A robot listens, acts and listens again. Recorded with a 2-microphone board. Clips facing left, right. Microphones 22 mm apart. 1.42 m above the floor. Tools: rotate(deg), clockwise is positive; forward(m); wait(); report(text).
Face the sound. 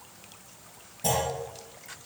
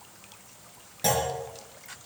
rotate(60)
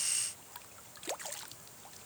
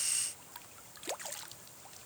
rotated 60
wait()
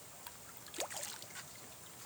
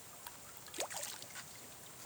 report("I heard a clunk, but can't make it out now. It was about straight ahead or 60° right.")